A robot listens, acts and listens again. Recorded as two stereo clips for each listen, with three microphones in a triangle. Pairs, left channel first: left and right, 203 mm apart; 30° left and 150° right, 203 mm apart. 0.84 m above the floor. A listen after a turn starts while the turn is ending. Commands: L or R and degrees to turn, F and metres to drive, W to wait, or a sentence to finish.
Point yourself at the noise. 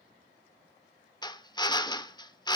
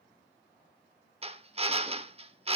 L155
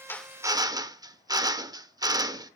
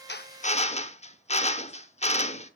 R25
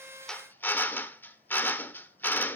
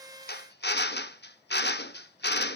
L10
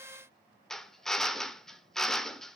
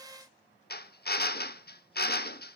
Found it: a drill, straight ahead, under 1 m away.